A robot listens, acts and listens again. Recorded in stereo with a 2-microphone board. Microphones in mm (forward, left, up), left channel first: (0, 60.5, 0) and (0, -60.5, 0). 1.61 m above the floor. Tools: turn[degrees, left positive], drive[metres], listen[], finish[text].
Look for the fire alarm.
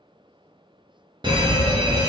Thought: The fire alarm: about 40° right or 140° right.
Action: turn[-40]
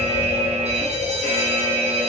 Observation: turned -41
Thought: So it is at 95° right.
Action: turn[-95]
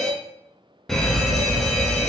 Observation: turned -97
Action: finish[Facing the fire alarm, under 1 m away.]